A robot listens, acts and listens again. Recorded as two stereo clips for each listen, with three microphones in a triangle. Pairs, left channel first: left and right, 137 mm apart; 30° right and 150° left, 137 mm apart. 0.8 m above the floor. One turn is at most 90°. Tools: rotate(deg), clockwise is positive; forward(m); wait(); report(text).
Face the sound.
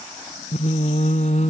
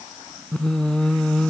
rotate(-55)
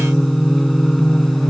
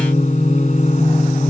report("Facing the singing.")